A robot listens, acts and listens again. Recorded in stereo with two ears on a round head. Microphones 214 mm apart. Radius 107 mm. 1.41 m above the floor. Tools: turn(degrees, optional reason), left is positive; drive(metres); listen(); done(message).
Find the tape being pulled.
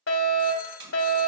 turn(degrees=-50, reason="The tape being pulled: about 50° right or 130° right.")
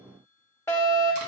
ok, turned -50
listen()
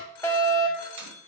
listen()
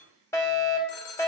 done("I heard tape being pulled, but can't make it out now. It was about straight ahead or 80° right.")